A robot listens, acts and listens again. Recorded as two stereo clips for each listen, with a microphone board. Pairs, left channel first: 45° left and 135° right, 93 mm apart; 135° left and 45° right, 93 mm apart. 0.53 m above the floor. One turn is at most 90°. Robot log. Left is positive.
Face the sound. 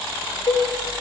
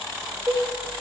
note: The cowbell: 15° left.
cmd yaw +15
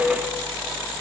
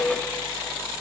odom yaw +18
cmd idle
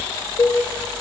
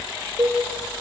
end: Found it: a cowbell, straight ahead, under 1 m away.